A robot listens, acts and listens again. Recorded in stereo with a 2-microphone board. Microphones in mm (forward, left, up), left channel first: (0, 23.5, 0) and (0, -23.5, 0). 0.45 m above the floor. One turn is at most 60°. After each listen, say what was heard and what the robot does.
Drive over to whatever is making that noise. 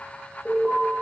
The alarm: about 20° left or 160° left. Turn 20° left.
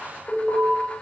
So it is at 10° left. Turn 10° left.
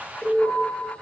Drive 1.0 m forward.
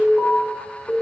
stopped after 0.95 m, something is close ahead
Arrived at the alarm, straight ahead.